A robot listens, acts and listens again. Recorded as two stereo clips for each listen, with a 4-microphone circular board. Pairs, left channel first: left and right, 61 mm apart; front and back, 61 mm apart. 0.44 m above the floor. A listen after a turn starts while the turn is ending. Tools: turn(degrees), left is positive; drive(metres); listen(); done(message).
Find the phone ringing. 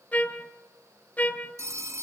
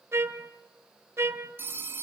turn(degrees=-130)
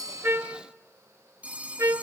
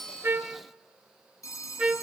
turn(degrees=-25)
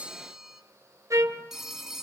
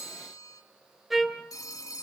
turn(degrees=-10)
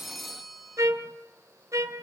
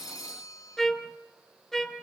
done("Facing the phone ringing.")